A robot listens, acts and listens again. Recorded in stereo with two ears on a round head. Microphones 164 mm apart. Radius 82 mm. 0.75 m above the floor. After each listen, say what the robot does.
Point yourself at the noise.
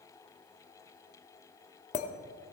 Turn 40° left.
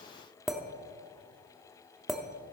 Facing the clink, under 1 m away.